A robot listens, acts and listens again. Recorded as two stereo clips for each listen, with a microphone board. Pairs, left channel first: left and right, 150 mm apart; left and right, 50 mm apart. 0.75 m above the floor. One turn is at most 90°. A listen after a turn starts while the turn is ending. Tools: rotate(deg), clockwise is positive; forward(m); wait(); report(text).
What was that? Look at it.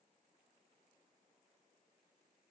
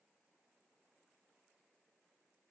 wait()
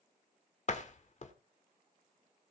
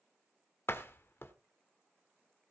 rotate(-50)
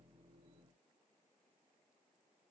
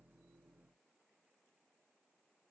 wait()
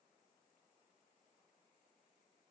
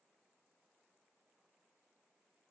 report("I heard a door slam, but can't make it out now. It was about straight ahead or 80° left.")